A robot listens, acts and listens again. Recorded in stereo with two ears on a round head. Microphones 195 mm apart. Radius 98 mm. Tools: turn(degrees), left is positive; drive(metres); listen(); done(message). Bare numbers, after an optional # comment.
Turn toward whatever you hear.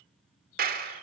# The clap: about 45° right or 135° right.
turn(-45)
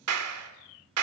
# So it is at 90° right.
turn(-90)
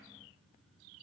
listen()
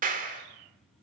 # The clap is now 40° right.
turn(-40)
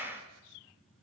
# The clap is now 10° right.
turn(-10)
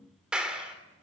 done("Found it: a clap, straight ahead, 2 to 4 m away.")